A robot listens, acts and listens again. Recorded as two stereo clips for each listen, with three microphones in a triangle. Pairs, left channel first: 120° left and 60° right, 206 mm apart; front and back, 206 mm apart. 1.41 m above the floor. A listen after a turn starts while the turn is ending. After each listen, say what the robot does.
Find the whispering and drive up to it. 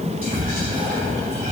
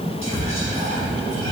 Turn 15° right.
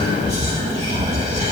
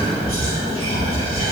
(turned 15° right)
Drive 1.0 m forward.
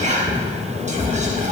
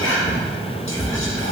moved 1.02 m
Drive 1.0 m forward.
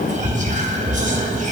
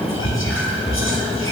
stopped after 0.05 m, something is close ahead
Arrived at the whispering, straight ahead.